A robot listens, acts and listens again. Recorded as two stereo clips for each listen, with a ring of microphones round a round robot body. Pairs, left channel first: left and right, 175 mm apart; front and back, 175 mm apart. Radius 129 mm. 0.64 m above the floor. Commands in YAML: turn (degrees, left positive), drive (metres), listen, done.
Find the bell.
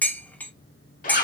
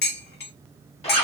listen: true
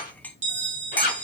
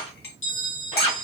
turn: -40
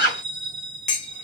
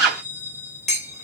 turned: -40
done: "Facing the bell, 1 to 2 m away."